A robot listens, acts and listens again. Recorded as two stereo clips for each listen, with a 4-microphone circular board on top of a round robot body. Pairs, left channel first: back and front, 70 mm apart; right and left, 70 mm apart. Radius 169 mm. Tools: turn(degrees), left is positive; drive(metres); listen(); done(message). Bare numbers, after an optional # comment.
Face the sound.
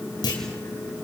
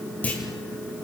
# The clunk: 160° right.
turn(-160)
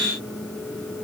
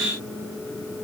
done("Facing where the clunk came from. I can't hear it now.")